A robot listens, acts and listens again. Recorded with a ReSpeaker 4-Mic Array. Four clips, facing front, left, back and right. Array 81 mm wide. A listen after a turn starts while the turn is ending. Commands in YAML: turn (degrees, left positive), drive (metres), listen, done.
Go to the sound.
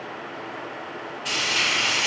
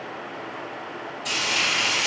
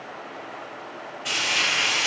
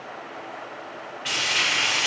turn: -90
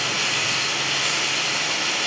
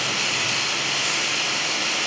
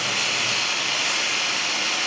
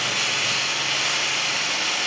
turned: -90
turn: -30
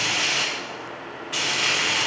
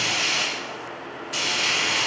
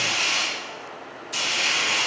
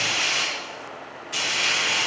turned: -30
turn: -10
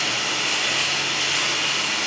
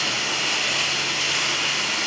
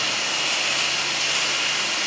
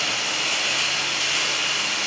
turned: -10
drive: 1.0
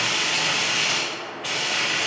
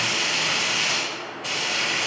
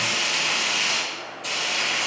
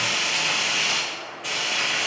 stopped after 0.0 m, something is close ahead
done: "Something is in my way. I am facing the frying but have not reached it."